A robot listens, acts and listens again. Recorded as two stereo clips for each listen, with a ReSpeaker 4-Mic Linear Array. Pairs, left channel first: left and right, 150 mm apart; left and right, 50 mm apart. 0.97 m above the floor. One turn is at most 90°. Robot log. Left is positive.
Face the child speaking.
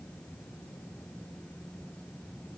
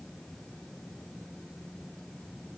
cmd idle
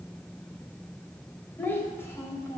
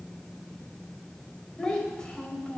note: The child speaking: about 20° left or 160° left.
cmd yaw +20
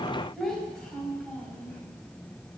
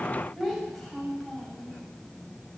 cmd yaw +30
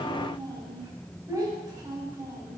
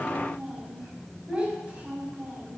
note: So it is at 20° right.
cmd yaw -20
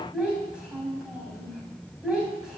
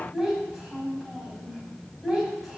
end: Facing the child speaking, over 4 m away.